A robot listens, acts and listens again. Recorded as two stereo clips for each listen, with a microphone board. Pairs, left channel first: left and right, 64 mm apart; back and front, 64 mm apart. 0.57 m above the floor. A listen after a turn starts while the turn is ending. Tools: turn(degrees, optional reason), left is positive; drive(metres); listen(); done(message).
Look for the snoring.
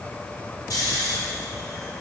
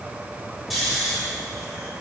turn(degrees=90, reason="The snoring: 90° left.")
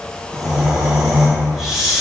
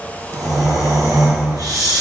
done("Facing the snoring.")